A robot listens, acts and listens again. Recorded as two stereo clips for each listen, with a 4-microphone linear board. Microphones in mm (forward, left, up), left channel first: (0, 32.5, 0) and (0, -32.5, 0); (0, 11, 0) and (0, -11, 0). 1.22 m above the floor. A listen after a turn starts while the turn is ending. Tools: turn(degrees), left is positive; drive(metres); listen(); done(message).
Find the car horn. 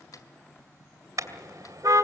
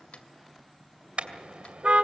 turn(degrees=-60)
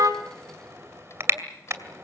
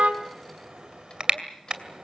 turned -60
turn(degrees=-45)
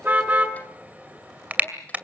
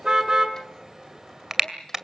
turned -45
turn(degrees=-25)
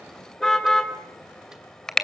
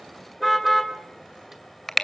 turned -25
turn(degrees=10)
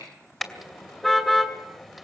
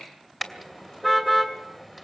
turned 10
done("Facing the car horn.")